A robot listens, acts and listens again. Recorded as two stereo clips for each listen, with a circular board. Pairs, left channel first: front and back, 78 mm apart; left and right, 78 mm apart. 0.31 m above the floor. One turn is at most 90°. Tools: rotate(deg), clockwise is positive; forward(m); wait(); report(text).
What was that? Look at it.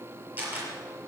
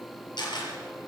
rotate(-90)
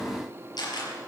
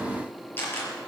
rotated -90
rotate(-25)
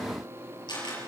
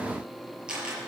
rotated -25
rotate(10)
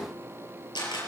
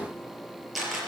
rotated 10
report("Facing the camera shutter, over 4 m away.")